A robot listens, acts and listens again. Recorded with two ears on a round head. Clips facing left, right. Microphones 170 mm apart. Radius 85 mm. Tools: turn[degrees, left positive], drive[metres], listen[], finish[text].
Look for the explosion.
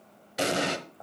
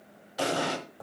Thought: The explosion: about 25° left or 155° left.
Action: turn[25]
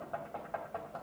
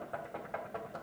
Action: listen[]
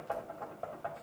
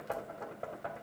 Action: finish[I heard an explosion, but can't make it out now. It was about straight ahead or 130° left.]